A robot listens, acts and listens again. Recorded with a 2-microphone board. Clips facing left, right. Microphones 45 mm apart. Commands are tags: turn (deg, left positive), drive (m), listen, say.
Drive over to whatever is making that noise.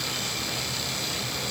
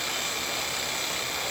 <listen/>
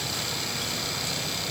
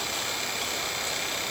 <listen/>
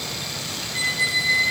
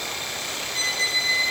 <turn deg="30"/>
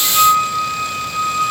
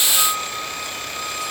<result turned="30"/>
<turn deg="140"/>
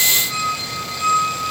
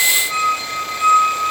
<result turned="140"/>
<turn deg="-20"/>
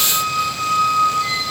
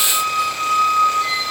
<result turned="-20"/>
<drive m="1.0"/>
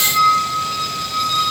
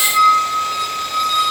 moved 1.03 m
<turn deg="-10"/>
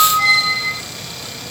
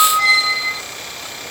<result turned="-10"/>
<drive m="1.0"/>
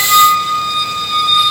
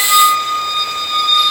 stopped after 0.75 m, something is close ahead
<turn deg="10"/>
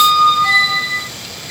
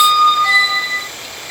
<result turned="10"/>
<say>Arrived at the squeak, straight ahead.</say>